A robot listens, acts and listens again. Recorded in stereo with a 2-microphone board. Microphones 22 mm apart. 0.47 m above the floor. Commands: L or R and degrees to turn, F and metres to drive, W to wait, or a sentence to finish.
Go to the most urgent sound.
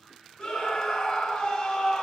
L35
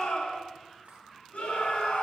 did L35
L100
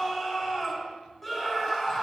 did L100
L15
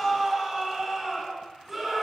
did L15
F1.0
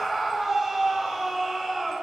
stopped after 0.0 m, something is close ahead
Blocked. The scream is further on, straight ahead.